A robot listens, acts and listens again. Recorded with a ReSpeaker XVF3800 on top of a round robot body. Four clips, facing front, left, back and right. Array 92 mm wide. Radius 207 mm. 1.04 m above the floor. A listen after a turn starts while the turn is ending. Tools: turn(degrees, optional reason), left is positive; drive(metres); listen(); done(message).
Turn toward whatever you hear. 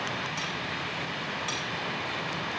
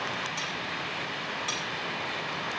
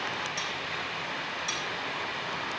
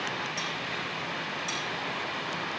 turn(degrees=50, reason="The cutlery clinking: 50° left.")
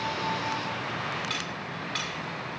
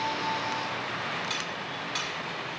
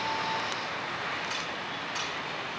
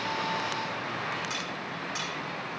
turn(degrees=-25, reason="The cutlery clinking is now 25° right.")
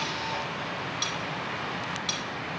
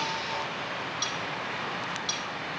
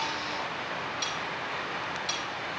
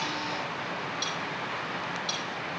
done("Found it: cutlery clinking, straight ahead, over 4 m away.")